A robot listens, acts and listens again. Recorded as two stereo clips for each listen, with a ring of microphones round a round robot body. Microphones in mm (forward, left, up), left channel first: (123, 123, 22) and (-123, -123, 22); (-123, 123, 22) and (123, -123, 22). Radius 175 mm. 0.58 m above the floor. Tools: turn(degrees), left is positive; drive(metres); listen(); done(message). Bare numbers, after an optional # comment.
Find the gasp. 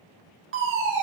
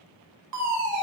listen()
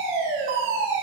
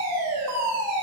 listen()
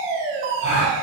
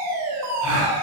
# The gasp: 25° right.
turn(-25)
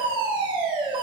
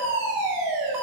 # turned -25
done("Facing where the gasp came from. I can't hear it now.")